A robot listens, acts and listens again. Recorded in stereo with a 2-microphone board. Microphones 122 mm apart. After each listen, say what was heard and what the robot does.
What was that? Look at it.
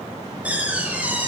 Turn 30° right.
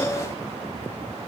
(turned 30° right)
Keep listening.
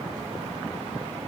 I heard a door slam, but can't make it out now. It was about 20° left or 140° right.